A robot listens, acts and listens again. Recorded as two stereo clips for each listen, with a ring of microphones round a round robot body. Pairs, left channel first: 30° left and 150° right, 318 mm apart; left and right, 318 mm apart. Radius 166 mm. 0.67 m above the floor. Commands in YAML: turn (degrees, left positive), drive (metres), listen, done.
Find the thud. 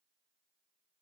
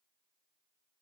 listen: true
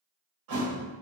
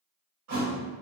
turn: -130
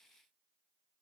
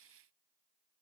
done: "I heard a thud from this way, but can't make it out now."